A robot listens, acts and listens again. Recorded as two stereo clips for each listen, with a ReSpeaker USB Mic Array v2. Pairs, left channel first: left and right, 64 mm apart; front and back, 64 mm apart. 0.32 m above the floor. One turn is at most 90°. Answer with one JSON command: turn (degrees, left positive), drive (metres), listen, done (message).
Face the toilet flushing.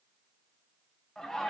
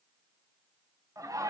{"listen": true}
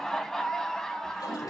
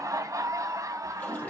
{"turn": 65}
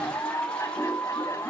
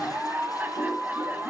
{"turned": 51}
{"turn": 15}
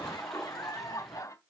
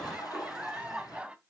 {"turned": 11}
{"done": "Facing the toilet flushing, over 4 m away."}